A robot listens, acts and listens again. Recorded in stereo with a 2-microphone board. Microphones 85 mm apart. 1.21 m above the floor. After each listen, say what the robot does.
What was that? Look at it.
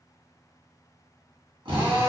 Turn 70° right.
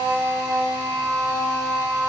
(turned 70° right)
Turn 40° right.
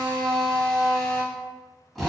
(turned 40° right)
Facing the drill, 1 to 2 m away.